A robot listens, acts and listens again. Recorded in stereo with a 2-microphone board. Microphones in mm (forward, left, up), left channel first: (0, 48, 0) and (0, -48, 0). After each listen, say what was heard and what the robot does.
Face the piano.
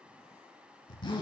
Keep listening.
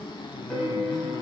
Turn 30° left.
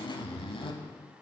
Keep listening.
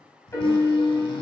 So it is at 150° left. Turn 150° left.
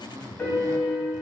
The piano is now 20° left. Turn 20° left.
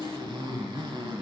Keep listening.
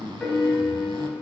Facing the piano, 2 to 4 m away.